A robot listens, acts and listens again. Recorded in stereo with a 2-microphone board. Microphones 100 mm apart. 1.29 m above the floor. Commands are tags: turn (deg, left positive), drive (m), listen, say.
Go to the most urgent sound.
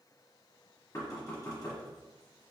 <listen/>
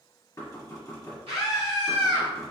<turn deg="-90"/>
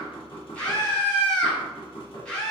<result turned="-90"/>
<turn deg="10"/>
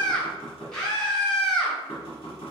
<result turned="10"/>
<drive m="1.0"/>
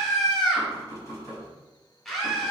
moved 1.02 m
<drive m="1.0"/>
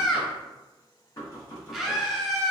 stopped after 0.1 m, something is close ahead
<say>I am next to the scream.</say>